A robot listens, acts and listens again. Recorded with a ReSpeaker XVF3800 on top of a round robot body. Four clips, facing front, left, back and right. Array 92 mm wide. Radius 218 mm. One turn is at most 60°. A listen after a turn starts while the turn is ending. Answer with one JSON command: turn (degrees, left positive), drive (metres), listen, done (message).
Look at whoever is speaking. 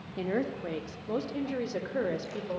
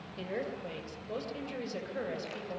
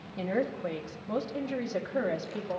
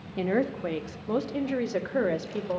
{"turn": -60}
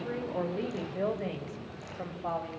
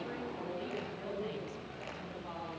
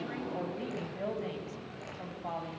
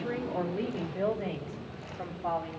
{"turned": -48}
{"turn": -50}
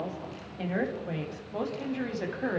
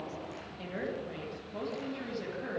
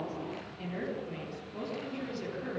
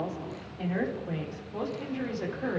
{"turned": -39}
{"turn": -10}
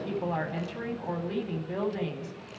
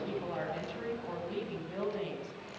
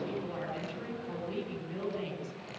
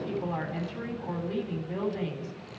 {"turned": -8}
{"done": "Found it: a woman speaking, straight ahead, over 4 m away."}